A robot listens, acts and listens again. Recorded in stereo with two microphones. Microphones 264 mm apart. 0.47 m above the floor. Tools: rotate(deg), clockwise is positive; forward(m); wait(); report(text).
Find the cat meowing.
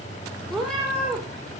rotate(-30)
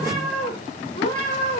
rotate(-145)
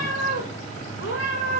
rotate(-50)
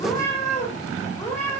rotate(-10)
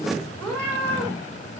report("Found it: a cat meowing, straight ahead.")